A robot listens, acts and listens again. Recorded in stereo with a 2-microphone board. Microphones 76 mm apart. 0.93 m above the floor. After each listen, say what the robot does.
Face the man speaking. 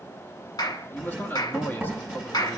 Turn 25° left.
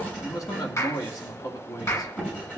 Turn 125° left.
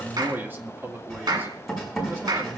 Turn 30° right.
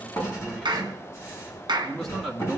Found it: a man speaking, straight ahead, 2 to 4 m away.